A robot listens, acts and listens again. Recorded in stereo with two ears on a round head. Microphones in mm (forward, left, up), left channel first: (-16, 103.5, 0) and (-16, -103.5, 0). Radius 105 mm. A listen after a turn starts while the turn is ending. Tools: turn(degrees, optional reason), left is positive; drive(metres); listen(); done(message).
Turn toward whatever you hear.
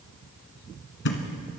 turn(degrees=55, reason="The thud: about 55° left or 125° left.")
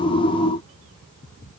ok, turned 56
listen()
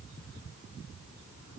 done("I heard a thud, but can't make it out now. It was about straight ahead or 65° left.")